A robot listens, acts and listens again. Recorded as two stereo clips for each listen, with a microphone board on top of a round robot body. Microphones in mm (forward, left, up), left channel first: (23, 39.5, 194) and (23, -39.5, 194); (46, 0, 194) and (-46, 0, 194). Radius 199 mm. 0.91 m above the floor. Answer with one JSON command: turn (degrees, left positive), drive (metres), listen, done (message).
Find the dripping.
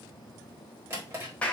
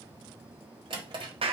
{"listen": true}
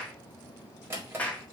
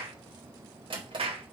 {"listen": true}
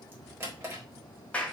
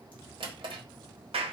{"done": "I can't make out dripping, only a drawer and a clap."}